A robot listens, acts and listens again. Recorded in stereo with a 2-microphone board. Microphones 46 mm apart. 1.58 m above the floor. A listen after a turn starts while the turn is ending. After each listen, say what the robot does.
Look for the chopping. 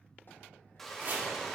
Turn 45° right.
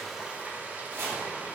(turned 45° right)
Turn 80° right.
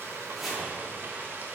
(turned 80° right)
Facing the chopping.